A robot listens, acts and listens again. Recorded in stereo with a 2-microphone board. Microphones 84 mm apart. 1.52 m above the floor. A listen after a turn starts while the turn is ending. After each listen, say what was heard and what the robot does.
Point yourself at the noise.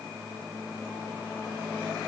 Keep listening.
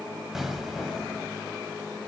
Turn 30° right.
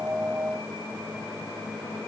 Keep listening.
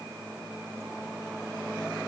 I heard an explosion, but can't make it out now. It was about 25° left or 145° right.